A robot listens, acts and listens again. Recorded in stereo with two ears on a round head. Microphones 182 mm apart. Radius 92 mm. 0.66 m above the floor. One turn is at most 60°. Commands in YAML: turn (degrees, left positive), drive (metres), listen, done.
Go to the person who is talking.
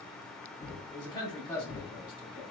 turn: 20
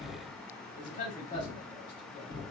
turn: 60
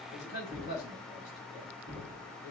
turn: 60
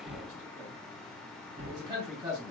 turn: -20
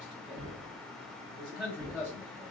drive: 1.0
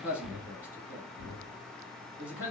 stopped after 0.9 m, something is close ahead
turn: -10
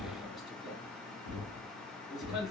done: "Arrived at the man speaking, straight ahead."